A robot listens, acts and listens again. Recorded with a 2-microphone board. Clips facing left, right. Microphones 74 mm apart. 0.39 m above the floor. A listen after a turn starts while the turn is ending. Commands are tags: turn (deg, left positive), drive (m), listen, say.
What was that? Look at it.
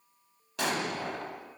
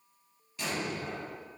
<turn deg="90"/>
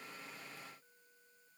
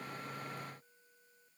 <say>Facing where the explosion came from. I can't hear it now.</say>